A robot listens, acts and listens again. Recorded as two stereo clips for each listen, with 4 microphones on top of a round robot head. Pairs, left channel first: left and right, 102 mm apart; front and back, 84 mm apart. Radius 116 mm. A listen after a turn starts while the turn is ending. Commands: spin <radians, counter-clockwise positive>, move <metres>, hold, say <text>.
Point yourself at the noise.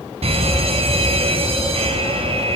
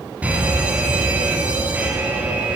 spin -1.83
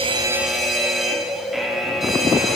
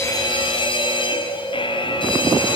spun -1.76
say Found it: a fire alarm, straight ahead, over 4 m away.